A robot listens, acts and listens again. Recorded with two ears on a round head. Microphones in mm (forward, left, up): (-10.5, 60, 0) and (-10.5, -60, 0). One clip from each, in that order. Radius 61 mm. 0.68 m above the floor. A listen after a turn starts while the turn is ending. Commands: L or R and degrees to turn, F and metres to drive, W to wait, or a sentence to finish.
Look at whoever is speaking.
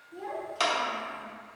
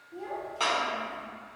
L20
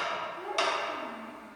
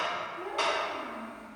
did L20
Found it: a child speaking, straight ahead, under 1 m away.